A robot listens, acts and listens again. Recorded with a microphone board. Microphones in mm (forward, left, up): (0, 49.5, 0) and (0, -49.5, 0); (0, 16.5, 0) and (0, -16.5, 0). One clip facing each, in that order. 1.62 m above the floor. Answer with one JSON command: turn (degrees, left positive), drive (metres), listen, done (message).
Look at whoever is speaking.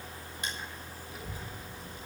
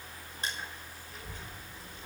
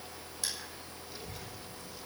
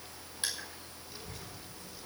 {"turn": 30}
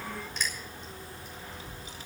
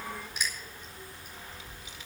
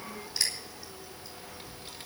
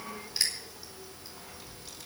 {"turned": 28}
{"turn": 140}
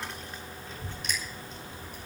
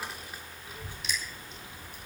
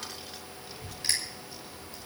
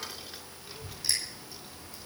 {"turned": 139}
{"turn": -15}
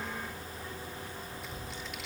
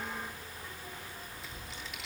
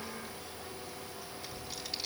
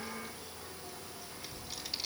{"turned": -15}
{"done": "Found it: a child speaking, straight ahead."}